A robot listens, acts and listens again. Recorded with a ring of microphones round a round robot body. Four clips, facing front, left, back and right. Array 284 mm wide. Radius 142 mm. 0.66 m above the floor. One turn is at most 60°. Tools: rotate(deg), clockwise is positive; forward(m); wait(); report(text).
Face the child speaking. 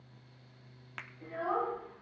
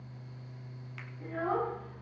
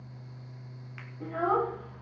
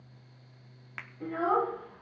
rotate(60)
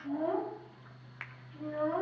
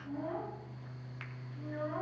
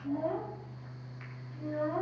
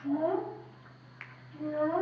rotate(60)
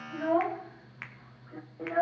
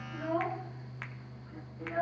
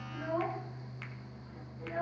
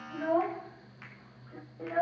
rotate(25)
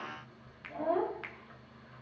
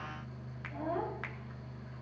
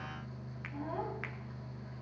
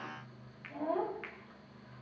report("Found it: a child speaking, straight ahead.")